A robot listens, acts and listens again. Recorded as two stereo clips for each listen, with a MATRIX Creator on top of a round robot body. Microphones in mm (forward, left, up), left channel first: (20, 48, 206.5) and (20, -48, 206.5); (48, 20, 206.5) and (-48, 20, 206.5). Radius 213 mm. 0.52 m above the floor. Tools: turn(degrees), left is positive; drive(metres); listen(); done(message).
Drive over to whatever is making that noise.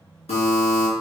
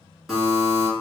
turn(degrees=95)
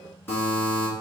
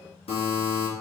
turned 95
turn(degrees=20)
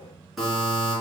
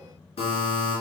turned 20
drive(metres=1.0)
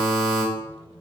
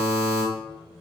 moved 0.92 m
drive(metres=1.0)
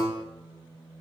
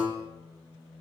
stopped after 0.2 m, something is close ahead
listen()
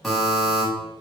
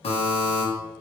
done("I am next to the buzzer.")